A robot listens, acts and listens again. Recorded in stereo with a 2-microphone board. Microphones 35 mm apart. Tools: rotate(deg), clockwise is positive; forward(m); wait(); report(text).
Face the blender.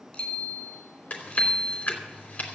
wait()
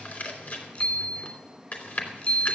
wait()
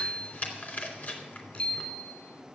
report("I can't make out a blender, only a bicycle bell and chewing.")